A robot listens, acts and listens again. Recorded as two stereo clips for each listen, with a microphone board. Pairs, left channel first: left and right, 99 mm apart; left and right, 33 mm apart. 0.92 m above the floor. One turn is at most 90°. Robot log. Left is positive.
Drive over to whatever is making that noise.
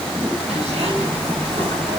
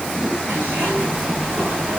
cmd yaw -90
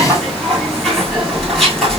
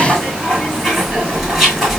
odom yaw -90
cmd fwd 1.0
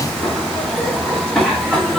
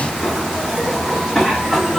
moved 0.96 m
cmd fwd 1.0
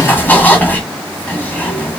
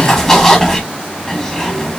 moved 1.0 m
note: The zipper is now 15° left.
cmd yaw +15
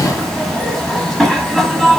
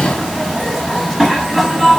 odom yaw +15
cmd fwd 1.0
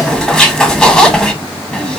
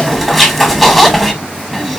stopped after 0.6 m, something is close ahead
end: Arrived at the zipper, straight ahead.